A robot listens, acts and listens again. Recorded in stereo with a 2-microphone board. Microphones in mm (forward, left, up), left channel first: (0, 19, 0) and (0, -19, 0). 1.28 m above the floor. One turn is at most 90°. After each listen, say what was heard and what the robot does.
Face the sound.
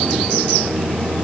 Keep listening.
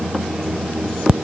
Keep listening.
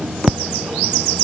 I can't make out anything to turn to.